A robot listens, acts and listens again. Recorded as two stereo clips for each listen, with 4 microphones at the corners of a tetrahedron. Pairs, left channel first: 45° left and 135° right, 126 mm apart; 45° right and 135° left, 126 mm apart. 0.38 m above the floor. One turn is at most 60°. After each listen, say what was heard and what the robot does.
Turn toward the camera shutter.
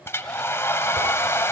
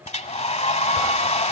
Keep listening.
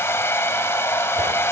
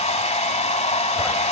Keep listening.
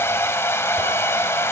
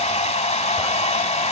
I can't make out a camera shutter, only a hair dryer.